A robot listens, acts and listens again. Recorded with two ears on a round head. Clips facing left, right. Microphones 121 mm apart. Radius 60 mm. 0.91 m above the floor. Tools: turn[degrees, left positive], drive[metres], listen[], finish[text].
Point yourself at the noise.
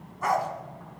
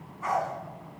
Thought: The dog barking: about 70° left or 110° left.
Action: turn[70]
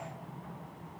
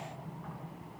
Thought: So it is at 40° left.
Action: turn[40]
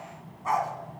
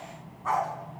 Thought: The dog barking is now 20° left.
Action: turn[20]
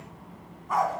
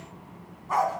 Action: finish[Facing the dog barking.]